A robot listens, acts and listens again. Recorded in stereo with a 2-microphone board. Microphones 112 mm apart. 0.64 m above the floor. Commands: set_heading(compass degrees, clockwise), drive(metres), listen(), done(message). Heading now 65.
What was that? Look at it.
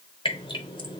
set_heading(15)
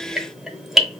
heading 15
done("Facing the dripping.")